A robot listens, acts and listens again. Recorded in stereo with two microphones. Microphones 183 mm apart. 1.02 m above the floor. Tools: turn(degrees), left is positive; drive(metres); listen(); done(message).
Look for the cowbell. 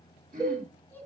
turn(degrees=-20)
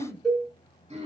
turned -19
done("Found it: a cowbell, straight ahead.")